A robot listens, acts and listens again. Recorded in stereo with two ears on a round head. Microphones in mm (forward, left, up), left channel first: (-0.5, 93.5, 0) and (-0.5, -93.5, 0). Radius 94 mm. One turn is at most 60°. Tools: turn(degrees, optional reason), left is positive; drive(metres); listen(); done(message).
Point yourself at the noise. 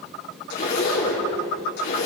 turn(degrees=55, reason="The zipper: about 55° left or 125° left.")
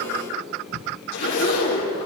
turn(degrees=60, reason="So it is at 75° left.")
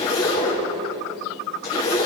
turn(degrees=30, reason="The zipper is now 30° left.")
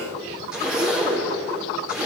done("Facing the zipper, over 4 m away.")